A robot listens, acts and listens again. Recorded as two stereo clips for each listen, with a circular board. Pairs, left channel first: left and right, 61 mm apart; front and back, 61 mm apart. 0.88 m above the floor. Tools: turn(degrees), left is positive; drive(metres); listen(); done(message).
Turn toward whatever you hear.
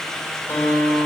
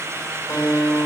turn(degrees=45)
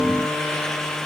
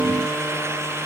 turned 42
listen()
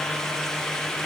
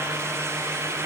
listen()
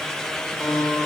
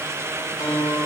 done("Facing the guitar, 2 to 4 m away.")